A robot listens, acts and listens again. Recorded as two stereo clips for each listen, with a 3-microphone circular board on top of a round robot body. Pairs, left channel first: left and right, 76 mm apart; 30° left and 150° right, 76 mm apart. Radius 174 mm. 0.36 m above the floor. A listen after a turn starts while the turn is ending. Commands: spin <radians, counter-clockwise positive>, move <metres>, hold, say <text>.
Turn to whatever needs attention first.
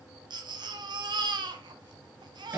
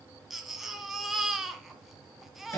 spin -1.13
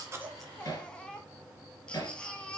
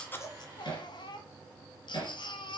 spin 0.17
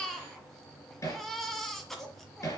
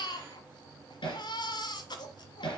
say Facing the baby crying.